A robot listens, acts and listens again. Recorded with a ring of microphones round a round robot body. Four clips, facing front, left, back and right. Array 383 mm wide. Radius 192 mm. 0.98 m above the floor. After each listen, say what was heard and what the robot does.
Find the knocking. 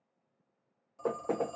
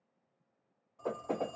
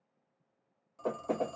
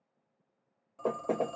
The knocking: 65° right. Turn 65° right.
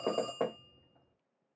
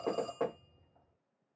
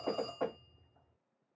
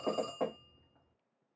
Facing the knocking.